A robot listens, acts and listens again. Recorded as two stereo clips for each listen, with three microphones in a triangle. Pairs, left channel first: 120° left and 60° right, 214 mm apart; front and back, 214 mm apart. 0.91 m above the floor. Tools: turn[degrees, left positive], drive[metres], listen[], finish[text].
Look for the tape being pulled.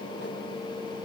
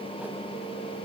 Action: listen[]
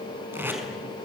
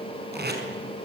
Thought: The tape being pulled: 140° right.
Action: turn[-140]
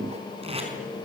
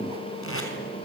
Action: finish[Facing the tape being pulled.]